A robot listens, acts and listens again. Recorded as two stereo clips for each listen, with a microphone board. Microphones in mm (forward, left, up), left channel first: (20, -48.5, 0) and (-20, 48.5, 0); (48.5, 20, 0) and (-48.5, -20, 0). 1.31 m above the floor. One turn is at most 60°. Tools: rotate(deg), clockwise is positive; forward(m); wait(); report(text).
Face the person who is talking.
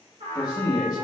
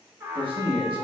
rotate(60)
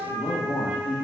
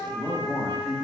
rotate(60)
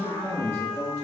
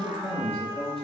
report("Found it: a man speaking, straight ahead, 1 to 2 m away.")